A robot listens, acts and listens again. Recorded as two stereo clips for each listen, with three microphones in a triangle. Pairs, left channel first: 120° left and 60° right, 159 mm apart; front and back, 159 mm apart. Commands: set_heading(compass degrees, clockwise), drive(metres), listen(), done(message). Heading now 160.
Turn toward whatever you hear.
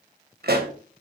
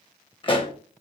set_heading(220)
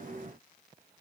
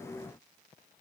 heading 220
done("I heard a pop from this way, but can't make it out now.")